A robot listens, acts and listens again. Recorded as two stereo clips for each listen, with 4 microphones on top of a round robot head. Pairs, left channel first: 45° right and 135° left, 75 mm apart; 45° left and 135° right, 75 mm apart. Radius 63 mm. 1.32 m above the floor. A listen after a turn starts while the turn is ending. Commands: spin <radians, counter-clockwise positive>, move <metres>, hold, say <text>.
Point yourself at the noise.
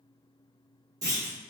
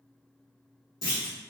spin 1.66
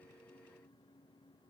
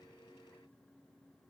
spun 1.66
say I heard a clunk from this way, but can't make it out now.